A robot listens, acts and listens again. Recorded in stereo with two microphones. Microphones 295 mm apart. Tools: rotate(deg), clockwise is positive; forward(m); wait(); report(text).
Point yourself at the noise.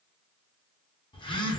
rotate(-15)
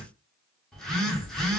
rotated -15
report("Facing the phone buzzing.")